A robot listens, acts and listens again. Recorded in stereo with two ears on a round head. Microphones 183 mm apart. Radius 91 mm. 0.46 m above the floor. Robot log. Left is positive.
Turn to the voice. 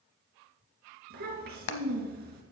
note: The child speaking: about 50° right or 130° right.
cmd yaw -50
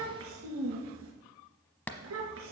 note: So it is at 80° right.
cmd yaw -80
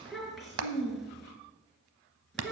end: Found it: a child speaking, straight ahead.